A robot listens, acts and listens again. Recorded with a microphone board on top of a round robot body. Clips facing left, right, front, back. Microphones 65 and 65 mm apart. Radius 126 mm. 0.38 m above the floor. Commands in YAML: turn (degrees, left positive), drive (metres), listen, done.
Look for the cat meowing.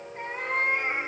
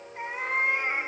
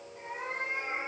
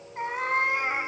turn: 180
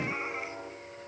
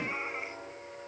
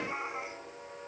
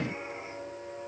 done: "Facing the cat meowing, 2 to 4 m away."